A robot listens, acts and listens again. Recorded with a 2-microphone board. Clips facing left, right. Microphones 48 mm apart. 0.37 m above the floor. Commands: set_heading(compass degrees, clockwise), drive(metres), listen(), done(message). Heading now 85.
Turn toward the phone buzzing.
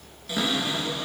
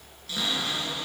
listen()
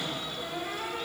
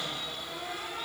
listen()
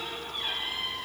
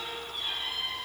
done("I can't make out a phone buzzing, only a cupboard door.")